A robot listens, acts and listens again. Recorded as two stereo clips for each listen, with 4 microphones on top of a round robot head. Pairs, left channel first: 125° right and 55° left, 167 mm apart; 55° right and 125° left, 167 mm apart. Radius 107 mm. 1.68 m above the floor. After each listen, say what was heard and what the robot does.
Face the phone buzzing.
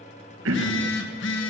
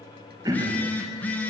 The phone buzzing: 135° right. Turn 135° right.
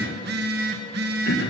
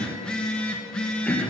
The phone buzzing is now 30° left. Turn 30° left.
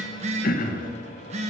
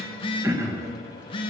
Facing the phone buzzing.